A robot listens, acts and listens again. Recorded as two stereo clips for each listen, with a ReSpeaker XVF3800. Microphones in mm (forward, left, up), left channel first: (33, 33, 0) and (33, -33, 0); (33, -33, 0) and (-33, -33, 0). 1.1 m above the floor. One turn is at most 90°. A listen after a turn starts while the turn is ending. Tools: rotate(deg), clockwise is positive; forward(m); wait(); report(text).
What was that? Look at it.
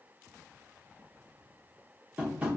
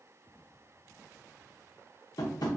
rotate(20)
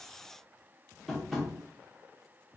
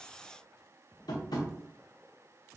report("Found it: tapping, straight ahead.")